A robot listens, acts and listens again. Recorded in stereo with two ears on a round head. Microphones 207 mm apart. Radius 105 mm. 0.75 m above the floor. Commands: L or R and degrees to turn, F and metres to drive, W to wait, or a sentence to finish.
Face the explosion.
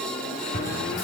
L35
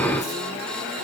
W
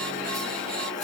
I heard an explosion, but can't make it out now. It was about straight ahead or 110° left.